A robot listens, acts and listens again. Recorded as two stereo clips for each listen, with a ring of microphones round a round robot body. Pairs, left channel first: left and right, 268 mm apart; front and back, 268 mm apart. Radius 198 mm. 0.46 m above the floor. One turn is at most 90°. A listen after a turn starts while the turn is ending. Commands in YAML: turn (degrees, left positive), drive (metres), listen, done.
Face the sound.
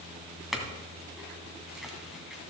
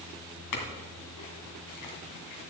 done: "Found it: a clink, straight ahead."